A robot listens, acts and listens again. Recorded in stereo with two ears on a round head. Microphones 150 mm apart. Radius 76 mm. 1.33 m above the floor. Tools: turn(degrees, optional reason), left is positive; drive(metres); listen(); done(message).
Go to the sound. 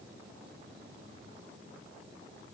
listen()
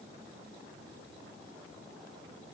listen()
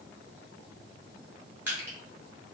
turn(degrees=-30)
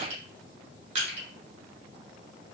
turn(degrees=-135, reason="So it is at 135° right.")
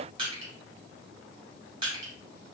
turn(degrees=-30, reason="The crushing is now 30° right.")
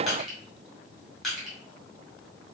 drive(metres=1.0)
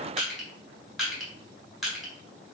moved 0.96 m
drive(metres=1.0)
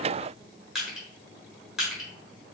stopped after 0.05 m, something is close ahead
done("I am next to the crushing.")